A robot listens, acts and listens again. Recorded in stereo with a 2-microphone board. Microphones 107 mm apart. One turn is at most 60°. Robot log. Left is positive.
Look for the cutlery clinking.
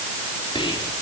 cmd idle
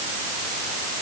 cmd idle
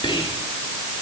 end: I can't make out cutlery clinking to turn to.